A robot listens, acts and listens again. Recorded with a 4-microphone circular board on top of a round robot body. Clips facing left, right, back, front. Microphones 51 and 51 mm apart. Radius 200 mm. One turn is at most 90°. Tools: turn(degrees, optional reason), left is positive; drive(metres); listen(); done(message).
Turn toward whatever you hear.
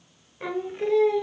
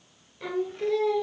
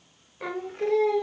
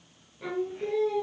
turn(degrees=90, reason="The singing: 160° left.")
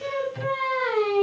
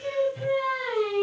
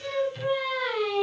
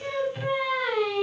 turn(degrees=90, reason="The singing is now 90° left.")
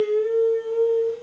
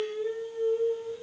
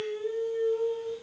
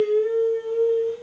turn(degrees=60, reason="The singing is now 60° left.")
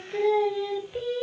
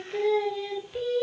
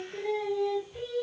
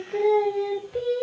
turn(degrees=10, reason="The singing is now 10° left.")
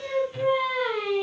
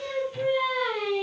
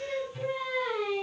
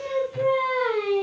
done("Facing the singing.")